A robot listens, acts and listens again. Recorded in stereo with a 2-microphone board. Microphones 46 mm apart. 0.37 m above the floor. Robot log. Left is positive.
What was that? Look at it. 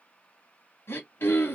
note: The throat clearing: about 60° left or 120° left.
cmd yaw +60
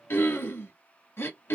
note: So it is at 65° left.
cmd yaw +65
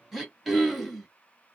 end: Found it: throat clearing, straight ahead, 1 to 2 m away.